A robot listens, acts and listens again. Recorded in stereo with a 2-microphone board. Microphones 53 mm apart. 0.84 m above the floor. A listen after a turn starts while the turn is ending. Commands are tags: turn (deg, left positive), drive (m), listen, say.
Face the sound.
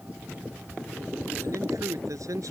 <turn deg="-90"/>
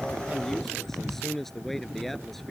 <say>Found it: a man speaking, straight ahead.</say>